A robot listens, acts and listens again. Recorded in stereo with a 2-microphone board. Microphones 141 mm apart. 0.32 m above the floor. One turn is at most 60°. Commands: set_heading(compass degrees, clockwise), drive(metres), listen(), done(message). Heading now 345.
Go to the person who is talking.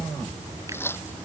listen()
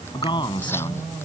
set_heading(310)
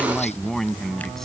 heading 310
drive(1.0)
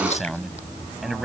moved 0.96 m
drive(1.0)
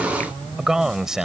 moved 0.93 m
drive(1.0)
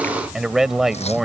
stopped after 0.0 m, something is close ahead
done("Arrived at the man speaking, straight ahead.")